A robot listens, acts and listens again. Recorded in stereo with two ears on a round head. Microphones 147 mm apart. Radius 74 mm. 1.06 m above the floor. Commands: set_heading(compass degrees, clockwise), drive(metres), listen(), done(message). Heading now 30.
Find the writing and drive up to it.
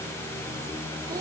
listen()
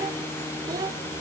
listen()
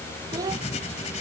set_heading(345)
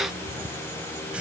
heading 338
set_heading(348)
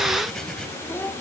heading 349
listen()
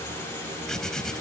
drive(1.0)
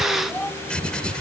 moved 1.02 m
drive(1.0)
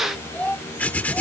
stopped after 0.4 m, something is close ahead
set_heading(339)
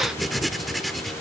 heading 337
done("Arrived at the writing, straight ahead.")